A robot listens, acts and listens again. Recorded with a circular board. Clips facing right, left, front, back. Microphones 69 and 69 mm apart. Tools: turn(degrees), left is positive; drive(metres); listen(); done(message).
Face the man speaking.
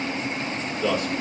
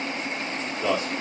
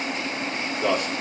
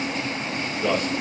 turn(degrees=20)
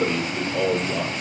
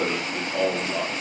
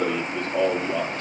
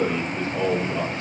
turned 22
done("Facing the man speaking.")